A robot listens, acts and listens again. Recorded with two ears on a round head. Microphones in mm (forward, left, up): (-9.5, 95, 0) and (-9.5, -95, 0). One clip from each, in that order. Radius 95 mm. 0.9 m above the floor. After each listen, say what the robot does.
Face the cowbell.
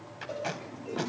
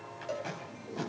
Turn 45° right.
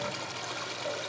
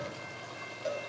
Turn 85° right.
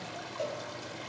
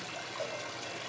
Found it: a cowbell, straight ahead.